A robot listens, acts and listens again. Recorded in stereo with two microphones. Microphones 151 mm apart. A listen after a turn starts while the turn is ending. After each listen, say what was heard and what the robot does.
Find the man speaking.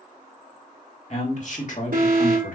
The man speaking: about 65° left or 115° left. Turn 65° left.
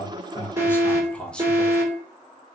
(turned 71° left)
Found it: a man speaking, straight ahead.